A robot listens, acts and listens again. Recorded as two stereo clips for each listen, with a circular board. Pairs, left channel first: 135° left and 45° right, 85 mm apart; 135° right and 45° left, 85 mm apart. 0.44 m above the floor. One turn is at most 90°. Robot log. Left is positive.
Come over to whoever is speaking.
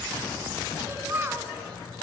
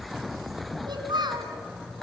note: The child speaking: 15° left.
cmd yaw +15
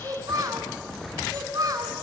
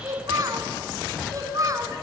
cmd fwd 1.0
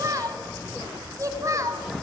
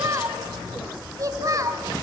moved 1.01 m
cmd fwd 1.0
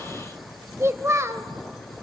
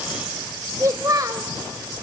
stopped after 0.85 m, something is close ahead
end: I am next to the child speaking.